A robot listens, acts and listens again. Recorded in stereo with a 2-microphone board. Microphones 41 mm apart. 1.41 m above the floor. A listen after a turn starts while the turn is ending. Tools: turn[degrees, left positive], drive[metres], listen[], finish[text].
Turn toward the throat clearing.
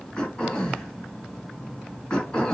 Thought: The throat clearing: about 20° left or 160° left.
Action: turn[20]
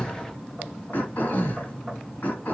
Thought: So it is at 135° left.
Action: turn[135]
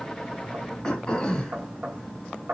Thought: The throat clearing is now 20° left.
Action: turn[20]
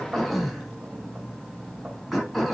Action: finish[Facing the throat clearing, 2 to 4 m away.]